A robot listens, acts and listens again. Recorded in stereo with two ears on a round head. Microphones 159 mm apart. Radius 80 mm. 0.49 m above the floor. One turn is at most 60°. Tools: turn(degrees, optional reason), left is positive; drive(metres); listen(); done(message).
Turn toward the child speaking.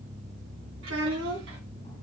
turn(degrees=-60)
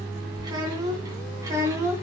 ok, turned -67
turn(degrees=-15, reason="So it is at 15° right.")
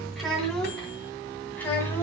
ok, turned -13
turn(degrees=10, reason="The child speaking is now 10° left.")
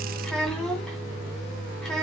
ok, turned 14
done("Found it: a child speaking, straight ahead, 2 to 4 m away.")